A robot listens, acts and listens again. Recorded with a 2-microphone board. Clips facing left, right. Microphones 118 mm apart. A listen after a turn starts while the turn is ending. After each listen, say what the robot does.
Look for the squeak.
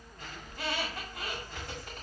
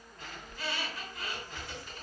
Turn 55° left.
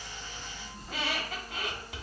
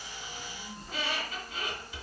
Turn 65° left.
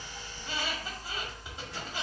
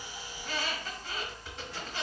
Turn 15° left.
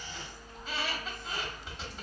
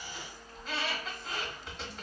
Found it: a squeak, straight ahead, 1 to 2 m away.